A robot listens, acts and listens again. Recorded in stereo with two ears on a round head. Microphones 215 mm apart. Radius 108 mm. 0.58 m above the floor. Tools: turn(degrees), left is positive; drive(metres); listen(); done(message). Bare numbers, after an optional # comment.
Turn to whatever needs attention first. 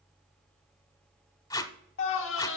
# The scream: about 55° left or 125° left.
turn(55)
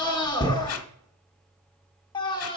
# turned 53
# So it is at 20° left.
turn(20)
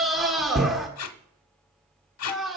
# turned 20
done("Found it: a scream, straight ahead, 1 to 2 m away.")